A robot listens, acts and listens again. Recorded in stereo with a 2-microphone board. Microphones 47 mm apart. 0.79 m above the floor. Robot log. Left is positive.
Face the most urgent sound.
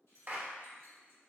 cmd idle
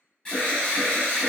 note: The alarm: about 20° left or 160° left.
cmd yaw +20
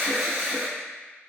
end: Facing the alarm, 1 to 2 m away.